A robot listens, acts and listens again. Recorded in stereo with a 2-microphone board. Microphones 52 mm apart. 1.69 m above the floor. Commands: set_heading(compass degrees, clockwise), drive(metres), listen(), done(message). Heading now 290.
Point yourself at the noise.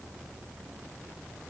listen()
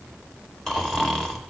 set_heading(260)
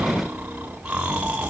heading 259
set_heading(279)
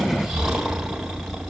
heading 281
done("Facing the snoring.")